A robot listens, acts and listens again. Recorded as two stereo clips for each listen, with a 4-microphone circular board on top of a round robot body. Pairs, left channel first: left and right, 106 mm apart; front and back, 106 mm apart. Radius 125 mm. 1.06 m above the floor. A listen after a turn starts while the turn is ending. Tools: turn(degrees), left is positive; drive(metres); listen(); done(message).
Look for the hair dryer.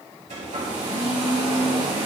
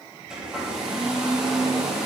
turn(degrees=-95)
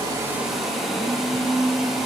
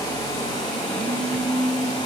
done("Facing the hair dryer.")